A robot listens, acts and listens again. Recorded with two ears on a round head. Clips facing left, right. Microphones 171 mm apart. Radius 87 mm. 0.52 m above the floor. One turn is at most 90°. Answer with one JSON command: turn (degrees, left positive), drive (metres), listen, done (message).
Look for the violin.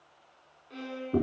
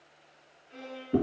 {"turn": 50}
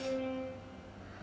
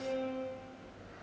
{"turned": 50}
{"done": "Found it: a violin, straight ahead, 1 to 2 m away."}